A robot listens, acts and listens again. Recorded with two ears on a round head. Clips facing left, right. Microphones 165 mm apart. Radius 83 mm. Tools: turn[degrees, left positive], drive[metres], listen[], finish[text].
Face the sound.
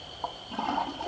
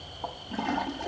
Thought: The toilet flushing: about 15° right or 165° right.
Action: turn[-15]
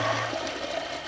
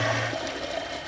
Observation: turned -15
Action: finish[Facing the toilet flushing.]